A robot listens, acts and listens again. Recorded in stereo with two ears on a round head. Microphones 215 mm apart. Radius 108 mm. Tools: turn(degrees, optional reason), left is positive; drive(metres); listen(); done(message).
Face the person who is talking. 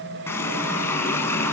listen()
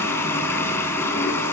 listen()
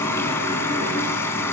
done("I can't make out anyone speaking to turn to.")